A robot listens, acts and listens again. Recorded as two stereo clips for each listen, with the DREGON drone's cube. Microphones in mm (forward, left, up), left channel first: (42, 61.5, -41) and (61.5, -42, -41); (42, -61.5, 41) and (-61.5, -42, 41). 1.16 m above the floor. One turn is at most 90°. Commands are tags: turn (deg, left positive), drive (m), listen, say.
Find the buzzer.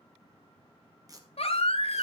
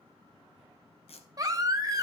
<listen/>
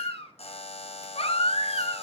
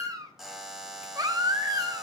<turn deg="80"/>
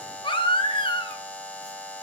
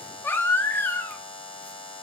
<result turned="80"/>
<turn deg="25"/>
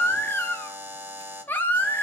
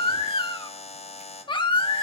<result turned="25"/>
<say>Facing the buzzer.</say>